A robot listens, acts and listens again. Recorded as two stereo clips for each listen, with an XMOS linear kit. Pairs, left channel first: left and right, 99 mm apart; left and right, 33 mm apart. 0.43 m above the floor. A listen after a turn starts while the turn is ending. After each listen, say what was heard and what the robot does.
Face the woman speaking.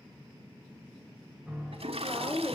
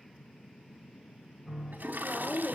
The woman speaking: about 25° left or 155° left. Turn 25° left.
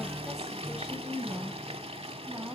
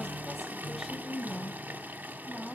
So it is at 25° right. Turn 25° right.
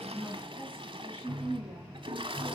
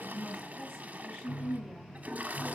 The woman speaking is now 10° left. Turn 10° left.
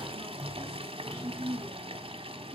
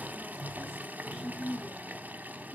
Facing the woman speaking, 2 to 4 m away.